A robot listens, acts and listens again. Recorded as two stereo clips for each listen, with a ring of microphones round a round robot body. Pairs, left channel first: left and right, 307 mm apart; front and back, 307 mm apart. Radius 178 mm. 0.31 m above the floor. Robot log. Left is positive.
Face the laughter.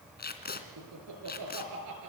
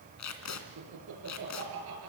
note: The laughter: 130° right.
cmd yaw -130
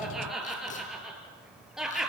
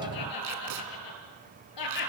end: Facing the laughter.